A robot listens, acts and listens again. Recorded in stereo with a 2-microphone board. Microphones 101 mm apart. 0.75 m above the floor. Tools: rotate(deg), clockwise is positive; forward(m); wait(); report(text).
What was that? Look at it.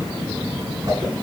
rotate(30)
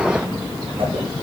rotate(120)
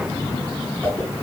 rotate(-15)
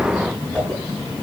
report("Found it: a whoosh, straight ahead, over 4 m away.")